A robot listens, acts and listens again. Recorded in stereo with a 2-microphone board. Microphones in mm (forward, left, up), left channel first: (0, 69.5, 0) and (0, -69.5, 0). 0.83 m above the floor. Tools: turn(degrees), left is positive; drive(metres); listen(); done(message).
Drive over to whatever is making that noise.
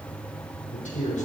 turn(degrees=55)
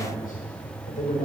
turn(degrees=65)
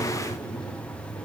listen()
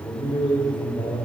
turn(degrees=35)
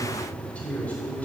turn(degrees=10)
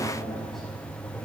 drive(metres=1.0)
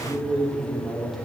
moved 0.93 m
drive(metres=1.0)
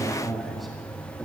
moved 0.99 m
drive(metres=1.0)
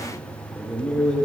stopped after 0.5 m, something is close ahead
done("I am next to the man speaking.")